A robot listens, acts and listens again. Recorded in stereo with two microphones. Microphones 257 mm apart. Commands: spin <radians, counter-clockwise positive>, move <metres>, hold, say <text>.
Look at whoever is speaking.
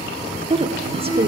spin -0.44
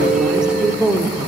say Facing the woman speaking, 1 to 2 m away.